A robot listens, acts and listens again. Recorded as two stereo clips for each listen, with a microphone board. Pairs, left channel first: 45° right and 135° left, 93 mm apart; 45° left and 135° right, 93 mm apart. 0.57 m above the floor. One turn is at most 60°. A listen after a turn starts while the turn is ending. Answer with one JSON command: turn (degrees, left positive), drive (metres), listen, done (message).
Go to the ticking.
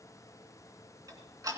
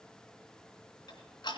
{"turn": 60}
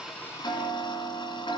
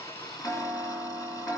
{"drive": 1.0}
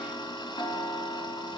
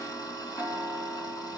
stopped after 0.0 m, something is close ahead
{"done": "Blocked. The ticking is further on, straight ahead."}